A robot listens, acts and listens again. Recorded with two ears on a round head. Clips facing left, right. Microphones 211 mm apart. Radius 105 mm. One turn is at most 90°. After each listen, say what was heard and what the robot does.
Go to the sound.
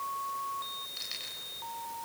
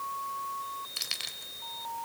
Turn 90° right.
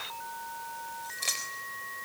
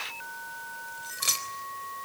So it is at 15° right. Turn 15° right.
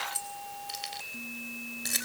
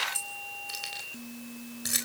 Drive 1.0 m forward.
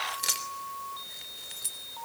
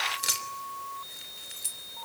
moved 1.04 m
Drive 1.0 m forward.
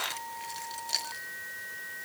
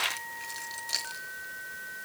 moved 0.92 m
Drive 1.0 m forward.
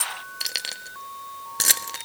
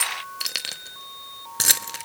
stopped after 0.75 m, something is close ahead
Arrived at the keys jangling, straight ahead.